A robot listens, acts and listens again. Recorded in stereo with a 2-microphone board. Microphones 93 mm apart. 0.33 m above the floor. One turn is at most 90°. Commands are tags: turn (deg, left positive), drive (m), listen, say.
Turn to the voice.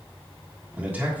<turn deg="-15"/>
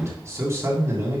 <turn deg="-90"/>
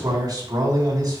<turn deg="-50"/>
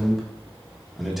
<say>Facing the man speaking, 2 to 4 m away.</say>